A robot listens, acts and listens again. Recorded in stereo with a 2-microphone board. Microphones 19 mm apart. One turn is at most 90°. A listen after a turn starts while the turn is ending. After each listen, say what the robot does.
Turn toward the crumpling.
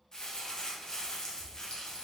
Turn 35° left.
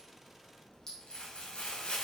Turn 90° left.
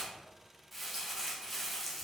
Found it: crumpling, straight ahead.